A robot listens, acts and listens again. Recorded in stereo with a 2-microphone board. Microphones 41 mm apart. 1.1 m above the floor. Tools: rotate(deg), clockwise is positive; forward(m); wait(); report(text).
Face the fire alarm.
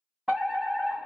rotate(20)
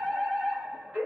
rotate(135)
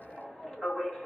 report("Found it: a fire alarm, straight ahead, 2 to 4 m away.")